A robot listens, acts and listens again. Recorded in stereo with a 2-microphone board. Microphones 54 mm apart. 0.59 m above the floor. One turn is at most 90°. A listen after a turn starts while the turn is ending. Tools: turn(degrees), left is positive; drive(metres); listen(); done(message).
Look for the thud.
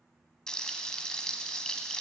listen()
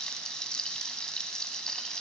listen()
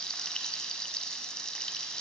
done("I can't make out a thud to turn to.")